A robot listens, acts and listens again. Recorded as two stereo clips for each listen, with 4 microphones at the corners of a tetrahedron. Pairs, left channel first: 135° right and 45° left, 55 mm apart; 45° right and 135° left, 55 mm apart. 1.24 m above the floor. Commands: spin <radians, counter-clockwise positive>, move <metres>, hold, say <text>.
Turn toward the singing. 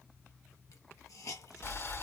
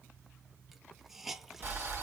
hold
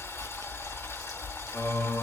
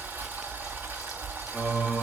spin -2.53
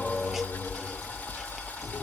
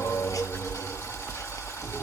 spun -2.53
spin -1.05
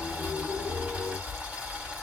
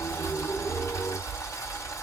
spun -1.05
hold
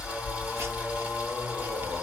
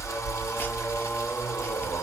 spin -0.35
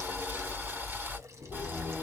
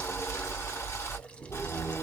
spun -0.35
say Facing the singing.